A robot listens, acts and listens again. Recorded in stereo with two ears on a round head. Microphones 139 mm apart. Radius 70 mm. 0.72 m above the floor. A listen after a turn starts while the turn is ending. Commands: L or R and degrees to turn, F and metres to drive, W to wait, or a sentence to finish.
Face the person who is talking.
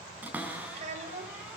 R45
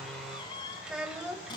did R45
Found it: a child speaking, straight ahead, 2 to 4 m away.